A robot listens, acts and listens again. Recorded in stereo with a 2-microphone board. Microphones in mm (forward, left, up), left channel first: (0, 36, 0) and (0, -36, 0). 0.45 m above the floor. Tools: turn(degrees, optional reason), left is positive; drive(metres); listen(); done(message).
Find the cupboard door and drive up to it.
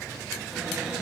turn(degrees=-30)
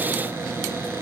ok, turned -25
turn(degrees=-145, reason="So it is at 145° right.")
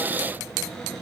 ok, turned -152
drive(metres=1.0)
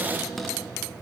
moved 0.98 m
drive(metres=1.0)
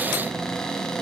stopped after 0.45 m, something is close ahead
turn(degrees=10, reason="The cupboard door is now 10° left.")
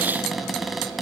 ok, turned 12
done("Arrived at the cupboard door, straight ahead.")